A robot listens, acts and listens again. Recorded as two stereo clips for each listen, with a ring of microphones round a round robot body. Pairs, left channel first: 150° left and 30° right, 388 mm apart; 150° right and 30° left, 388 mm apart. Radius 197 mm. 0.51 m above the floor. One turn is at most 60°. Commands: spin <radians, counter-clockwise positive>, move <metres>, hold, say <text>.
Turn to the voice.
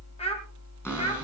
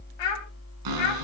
spin -1.05
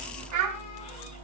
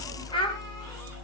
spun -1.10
spin -1.05
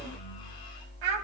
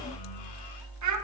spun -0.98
spin -0.26
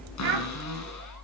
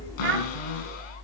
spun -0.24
say Found it: a child speaking, straight ahead, 2 to 4 m away.